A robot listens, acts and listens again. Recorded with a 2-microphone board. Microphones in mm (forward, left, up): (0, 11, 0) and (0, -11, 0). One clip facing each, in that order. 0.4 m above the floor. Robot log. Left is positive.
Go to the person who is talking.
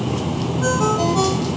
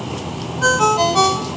cmd idle
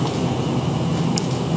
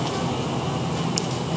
cmd idle
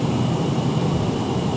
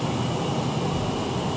note: The child speaking: about 60° left or 120° left.
cmd yaw +60
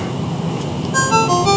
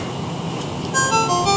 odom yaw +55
cmd idle
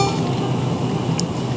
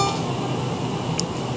cmd idle
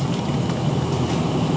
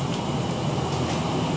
end: I heard a child speaking, but can't make it out now. It was about 5° left or 65° left. I did not reach it.